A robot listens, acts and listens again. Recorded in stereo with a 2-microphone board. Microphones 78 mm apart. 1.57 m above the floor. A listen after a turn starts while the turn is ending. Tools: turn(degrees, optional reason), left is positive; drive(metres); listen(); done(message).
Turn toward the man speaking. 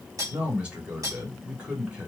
turn(degrees=-15, reason="The man speaking: about 15° right or 165° right.")
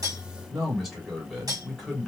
done("Facing the man speaking.")